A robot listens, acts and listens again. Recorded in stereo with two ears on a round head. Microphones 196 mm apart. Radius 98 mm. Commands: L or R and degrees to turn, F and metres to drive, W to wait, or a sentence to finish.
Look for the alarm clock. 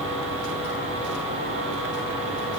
W
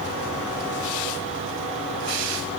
W
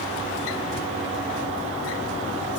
I can't make out an alarm clock.